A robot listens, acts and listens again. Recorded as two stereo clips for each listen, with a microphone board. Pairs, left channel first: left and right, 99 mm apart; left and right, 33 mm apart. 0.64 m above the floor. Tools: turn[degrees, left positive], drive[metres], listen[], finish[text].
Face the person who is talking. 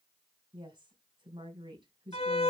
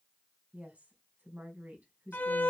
Thought: The woman speaking: about 50° right or 130° right.
Action: turn[-50]
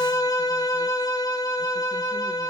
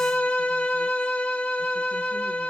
Action: listen[]
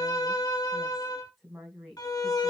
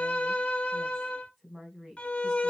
Action: finish[Facing the woman speaking, over 4 m away.]